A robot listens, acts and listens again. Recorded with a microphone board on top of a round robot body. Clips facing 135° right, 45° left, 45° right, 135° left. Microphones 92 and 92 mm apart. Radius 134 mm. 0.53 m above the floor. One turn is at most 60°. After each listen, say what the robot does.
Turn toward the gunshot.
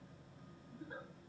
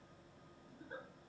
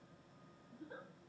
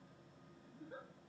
Keep listening.
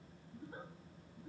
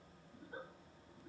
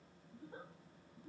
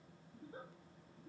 Keep listening.
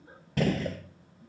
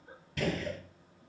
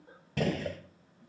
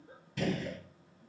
Turn 60° right.
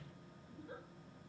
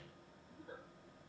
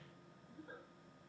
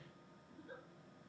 Turn 25° right.
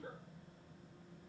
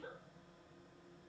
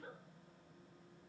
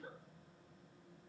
Facing where the gunshot came from. I can't hear it now.